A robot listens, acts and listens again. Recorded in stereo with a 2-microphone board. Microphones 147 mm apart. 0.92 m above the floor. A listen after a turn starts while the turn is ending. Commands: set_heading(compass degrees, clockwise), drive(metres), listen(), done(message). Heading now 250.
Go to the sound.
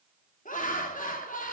set_heading(190)
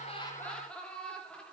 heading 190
drive(1.0)
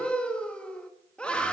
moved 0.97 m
drive(1.0)
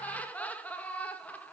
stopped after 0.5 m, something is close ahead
set_heading(180)
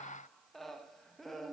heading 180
done("Arrived at the laughter, straight ahead.")